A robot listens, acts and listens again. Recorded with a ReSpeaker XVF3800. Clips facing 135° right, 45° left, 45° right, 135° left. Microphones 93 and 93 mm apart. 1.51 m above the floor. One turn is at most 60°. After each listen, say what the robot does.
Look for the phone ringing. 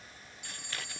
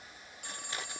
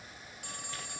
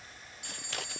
Facing the phone ringing.